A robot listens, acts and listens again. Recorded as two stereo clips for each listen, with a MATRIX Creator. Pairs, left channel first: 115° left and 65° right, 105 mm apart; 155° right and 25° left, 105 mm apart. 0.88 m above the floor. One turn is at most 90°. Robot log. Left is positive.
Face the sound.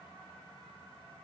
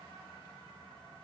cmd idle
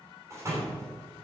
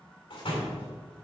note: The door slam: 125° right.
cmd yaw -90
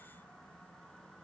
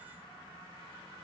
note: Nothing new. It was at 35° right.
cmd yaw -35
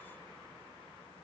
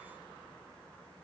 end: I heard a door slam from this way, but can't make it out now.